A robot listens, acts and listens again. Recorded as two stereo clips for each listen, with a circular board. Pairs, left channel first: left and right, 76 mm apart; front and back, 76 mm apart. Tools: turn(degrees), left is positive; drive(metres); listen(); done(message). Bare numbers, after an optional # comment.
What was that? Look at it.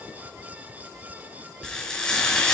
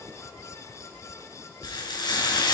# The frying: 10° left.
turn(10)
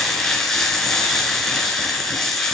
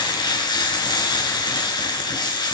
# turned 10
done("Found it: frying, straight ahead.")